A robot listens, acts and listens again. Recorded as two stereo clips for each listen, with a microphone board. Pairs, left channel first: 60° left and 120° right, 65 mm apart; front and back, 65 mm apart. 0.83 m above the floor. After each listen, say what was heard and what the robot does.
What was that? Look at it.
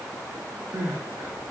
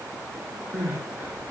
The crying: 135° right. Turn 135° right.
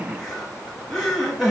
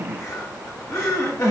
The crying is now 30° right. Turn 30° right.
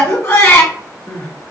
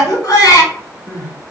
The crying is now 15° left. Turn 15° left.
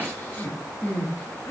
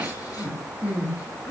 Facing the crying, 1 to 2 m away.